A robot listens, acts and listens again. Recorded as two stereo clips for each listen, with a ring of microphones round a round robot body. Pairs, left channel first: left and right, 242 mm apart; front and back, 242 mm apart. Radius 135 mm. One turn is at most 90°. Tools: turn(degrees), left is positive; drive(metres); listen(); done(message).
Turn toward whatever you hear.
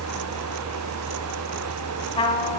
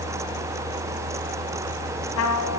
turn(degrees=20)
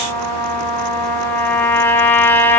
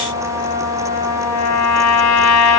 turn(degrees=10)
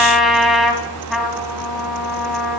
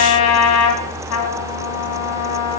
done("Found it: a trumpet, straight ahead, 1 to 2 m away.")